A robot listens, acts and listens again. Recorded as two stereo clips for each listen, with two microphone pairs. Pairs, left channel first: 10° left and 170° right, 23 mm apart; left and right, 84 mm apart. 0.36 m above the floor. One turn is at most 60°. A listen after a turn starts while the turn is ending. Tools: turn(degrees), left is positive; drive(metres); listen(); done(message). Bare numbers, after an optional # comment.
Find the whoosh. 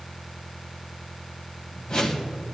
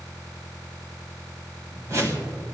# The whoosh: 40° right.
turn(-40)
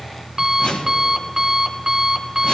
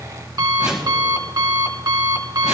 # The whoosh is now 10° right.
turn(-10)
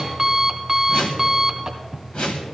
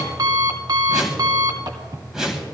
done("Facing the whoosh, 1 to 2 m away.")